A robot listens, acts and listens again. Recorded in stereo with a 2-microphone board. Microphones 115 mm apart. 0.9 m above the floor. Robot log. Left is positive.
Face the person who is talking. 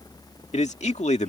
note: The man speaking: about 70° left or 110° left.
cmd yaw +70
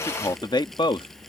note: So it is at 45° left.
cmd yaw +45
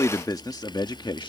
note: The man speaking is now 40° left.
cmd yaw +40
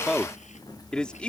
note: The man speaking is now 10° left.
cmd yaw +10
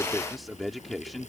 end: Found it: a man speaking, straight ahead.